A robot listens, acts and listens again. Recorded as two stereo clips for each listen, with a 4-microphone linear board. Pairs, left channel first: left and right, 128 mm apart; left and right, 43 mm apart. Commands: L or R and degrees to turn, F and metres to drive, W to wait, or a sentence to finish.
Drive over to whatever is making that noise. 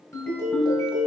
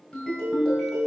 L20
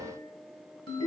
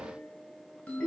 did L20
L140
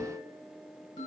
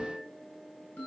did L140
L35
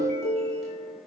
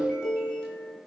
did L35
F1.0
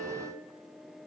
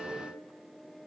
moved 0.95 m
L10
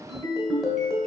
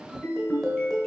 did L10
F1.0
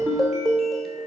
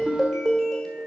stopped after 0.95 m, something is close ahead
Arrived at the ringtone, straight ahead.